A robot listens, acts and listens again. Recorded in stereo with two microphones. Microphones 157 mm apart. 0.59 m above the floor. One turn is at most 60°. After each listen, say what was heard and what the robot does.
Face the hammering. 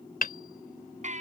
The hammering: about 70° left or 110° left. Turn 60° left.
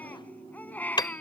So it is at 30° left. Turn 30° left.
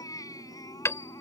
The hammering is now 20° left. Turn 20° left.
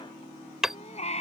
Facing the hammering.